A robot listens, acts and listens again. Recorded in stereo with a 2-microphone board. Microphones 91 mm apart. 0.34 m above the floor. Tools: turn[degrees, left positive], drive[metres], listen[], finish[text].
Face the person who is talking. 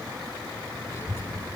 Thought: The child speaking: about 30° left or 150° left.
Action: turn[30]
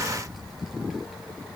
Action: finish[Facing the child speaking, over 4 m away.]